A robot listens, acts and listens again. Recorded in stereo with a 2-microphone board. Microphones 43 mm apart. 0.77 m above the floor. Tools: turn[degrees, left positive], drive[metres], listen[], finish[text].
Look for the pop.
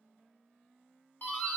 Action: listen[]
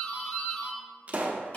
Thought: The pop: about 35° right or 145° right.
Action: turn[-35]
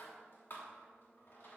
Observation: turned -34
Action: listen[]
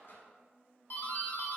Action: finish[I heard a pop, but can't make it out now. It was about straight ahead or 110° right.]